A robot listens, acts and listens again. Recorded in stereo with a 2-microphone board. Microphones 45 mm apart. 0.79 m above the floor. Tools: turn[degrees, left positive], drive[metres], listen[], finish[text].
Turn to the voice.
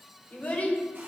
Thought: The child speaking: about 35° left or 145° left.
Action: turn[35]
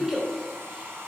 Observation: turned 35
Thought: So it is at 10° right.
Action: turn[-10]
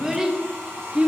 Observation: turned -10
Thought: The child speaking is now 30° right.
Action: turn[-30]
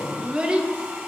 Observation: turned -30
Thought: The child speaking is now 30° right.
Action: turn[-30]
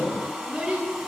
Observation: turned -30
Thought: The child speaking is now 25° right.
Action: turn[-25]
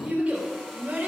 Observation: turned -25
Thought: The child speaking is now 30° right.
Action: turn[-30]
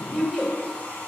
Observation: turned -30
Thought: The child speaking is now 15° left.
Action: turn[15]
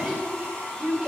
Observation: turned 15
Action: finish[Facing the child speaking, 2 to 4 m away.]